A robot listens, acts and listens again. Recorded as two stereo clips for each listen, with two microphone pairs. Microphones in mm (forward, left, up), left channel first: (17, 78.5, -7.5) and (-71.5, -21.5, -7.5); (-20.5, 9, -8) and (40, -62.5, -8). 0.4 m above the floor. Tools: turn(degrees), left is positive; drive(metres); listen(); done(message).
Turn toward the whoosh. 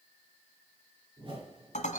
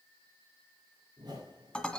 turn(degrees=-85)
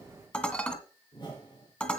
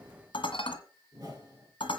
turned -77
done("Facing the whoosh.")